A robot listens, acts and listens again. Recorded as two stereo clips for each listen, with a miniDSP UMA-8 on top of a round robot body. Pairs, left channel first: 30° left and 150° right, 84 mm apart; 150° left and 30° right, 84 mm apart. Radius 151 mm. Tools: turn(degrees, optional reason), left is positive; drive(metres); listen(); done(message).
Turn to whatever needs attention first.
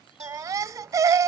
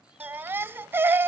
turn(degrees=-95, reason="The baby crying: 95° right.")
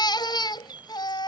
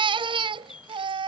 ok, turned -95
turn(degrees=-10, reason="The baby crying is now 10° right.")
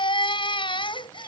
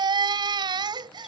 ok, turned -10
done("Facing the baby crying.")